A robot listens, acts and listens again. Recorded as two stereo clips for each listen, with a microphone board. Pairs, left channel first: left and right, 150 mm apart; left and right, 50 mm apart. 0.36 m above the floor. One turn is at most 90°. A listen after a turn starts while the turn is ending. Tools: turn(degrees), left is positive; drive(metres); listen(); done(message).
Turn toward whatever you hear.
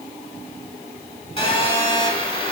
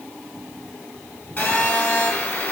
turn(degrees=35)
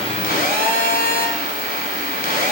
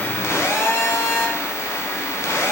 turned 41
turn(degrees=90)
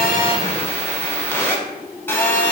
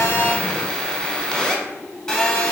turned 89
turn(degrees=15)
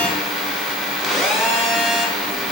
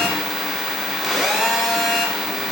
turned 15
done("Found it: a phone buzzing, straight ahead.")